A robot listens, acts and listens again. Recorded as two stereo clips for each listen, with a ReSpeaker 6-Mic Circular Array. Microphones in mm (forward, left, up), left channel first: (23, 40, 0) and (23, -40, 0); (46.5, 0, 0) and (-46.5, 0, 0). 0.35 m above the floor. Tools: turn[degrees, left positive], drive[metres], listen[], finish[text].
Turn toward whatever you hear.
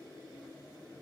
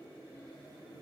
Action: listen[]
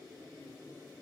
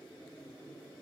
Action: listen[]
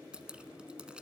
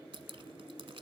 Thought: The dripping: 165° right.
Action: turn[-165]
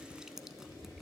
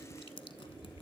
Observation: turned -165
Action: finish[Found it: dripping, straight ahead, under 1 m away.]